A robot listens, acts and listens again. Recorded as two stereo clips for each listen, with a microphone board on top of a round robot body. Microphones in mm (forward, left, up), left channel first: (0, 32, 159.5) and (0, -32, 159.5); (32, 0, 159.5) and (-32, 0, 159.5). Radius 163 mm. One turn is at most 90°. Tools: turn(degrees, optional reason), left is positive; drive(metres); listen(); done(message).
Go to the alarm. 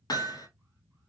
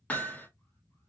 listen()
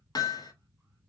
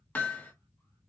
listen()
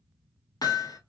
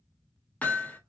done("I can't make out an alarm, only hammering.")